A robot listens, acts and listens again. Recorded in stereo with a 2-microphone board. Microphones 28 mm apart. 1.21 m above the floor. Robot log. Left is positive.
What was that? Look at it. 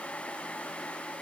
cmd idle
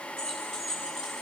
note: The keys jangling: about 15° left or 165° left.
cmd yaw +15
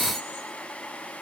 cmd idle
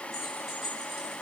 cmd yaw +30
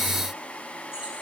cmd idle
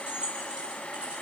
note: So it is at 25° right.
cmd yaw -25
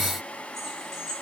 end: Found it: keys jangling, straight ahead, over 4 m away.